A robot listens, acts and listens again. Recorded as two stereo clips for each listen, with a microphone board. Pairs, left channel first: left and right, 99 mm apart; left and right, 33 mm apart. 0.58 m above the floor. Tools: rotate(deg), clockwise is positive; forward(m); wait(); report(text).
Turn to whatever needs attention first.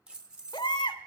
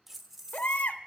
rotate(-50)
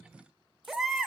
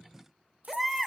report("Found it: a baby crying, straight ahead.")